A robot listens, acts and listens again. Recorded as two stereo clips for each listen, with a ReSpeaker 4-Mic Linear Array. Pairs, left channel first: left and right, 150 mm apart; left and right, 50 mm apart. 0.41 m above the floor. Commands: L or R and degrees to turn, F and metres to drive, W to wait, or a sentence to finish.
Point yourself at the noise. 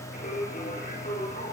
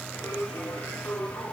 L65
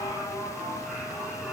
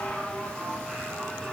Facing the singing, over 4 m away.